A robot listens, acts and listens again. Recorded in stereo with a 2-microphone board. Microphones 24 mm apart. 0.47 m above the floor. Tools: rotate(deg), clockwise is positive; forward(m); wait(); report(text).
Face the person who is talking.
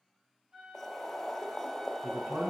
rotate(55)
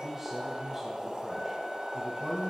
rotate(20)
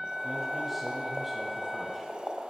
wait()
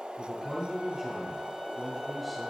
report("Found it: a man speaking, straight ahead.")